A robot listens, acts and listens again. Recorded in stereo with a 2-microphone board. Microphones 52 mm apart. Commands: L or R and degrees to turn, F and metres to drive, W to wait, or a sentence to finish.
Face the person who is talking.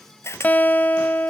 W
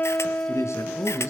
L70
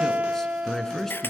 L10
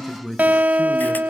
Found it: a man speaking, straight ahead.